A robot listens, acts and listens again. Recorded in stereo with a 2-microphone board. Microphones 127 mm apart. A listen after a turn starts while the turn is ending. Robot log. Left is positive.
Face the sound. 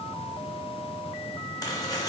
note: The chopping: about 30° left or 150° left.
cmd yaw +30
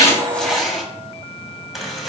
end: Found it: chopping, straight ahead.